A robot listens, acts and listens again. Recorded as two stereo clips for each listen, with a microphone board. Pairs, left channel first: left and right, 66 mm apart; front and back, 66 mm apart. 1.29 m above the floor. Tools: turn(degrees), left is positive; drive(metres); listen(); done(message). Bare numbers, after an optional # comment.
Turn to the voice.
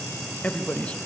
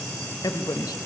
# The man speaking: 20° left.
turn(20)
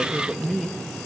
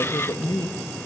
done("Found it: a man speaking, straight ahead.")